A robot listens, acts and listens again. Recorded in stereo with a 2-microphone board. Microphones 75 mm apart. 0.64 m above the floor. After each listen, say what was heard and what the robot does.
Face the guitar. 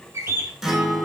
Turn 30° right.
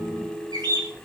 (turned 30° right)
So it is at 145° right. Turn 145° right.
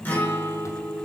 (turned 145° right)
The guitar is now 25° left. Turn 25° left.
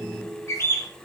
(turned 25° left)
Facing the guitar.